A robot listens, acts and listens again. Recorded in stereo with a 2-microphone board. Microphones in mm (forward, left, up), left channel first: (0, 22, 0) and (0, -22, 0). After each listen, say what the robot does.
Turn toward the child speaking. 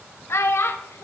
Turn 90° left.
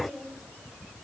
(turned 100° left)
Turn 10° right.
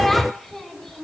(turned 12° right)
Facing the child speaking, 1 to 2 m away.